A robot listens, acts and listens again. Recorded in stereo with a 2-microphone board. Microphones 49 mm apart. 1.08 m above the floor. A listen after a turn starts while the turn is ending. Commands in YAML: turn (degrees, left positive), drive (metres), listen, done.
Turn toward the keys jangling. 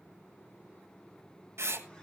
listen: true
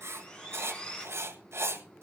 listen: true
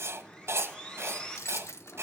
turn: 70
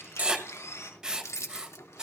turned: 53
turn: 75
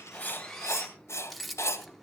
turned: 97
done: "Facing the keys jangling."